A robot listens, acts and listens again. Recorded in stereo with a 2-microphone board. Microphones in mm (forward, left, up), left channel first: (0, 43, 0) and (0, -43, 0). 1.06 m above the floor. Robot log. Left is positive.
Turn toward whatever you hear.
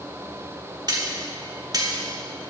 note: The cutlery clinking: about 50° right or 130° right.
cmd yaw -50
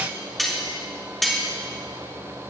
end: Found it: cutlery clinking, straight ahead, 1 to 2 m away.